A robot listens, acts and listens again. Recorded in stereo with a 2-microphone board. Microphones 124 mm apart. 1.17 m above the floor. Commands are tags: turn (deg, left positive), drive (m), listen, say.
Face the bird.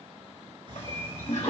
<turn deg="-40"/>
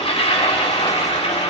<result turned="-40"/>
<listen/>
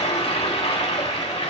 <listen/>
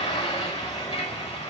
<say>I heard a bird, but can't make it out now. It was about straight ahead or 100° right.</say>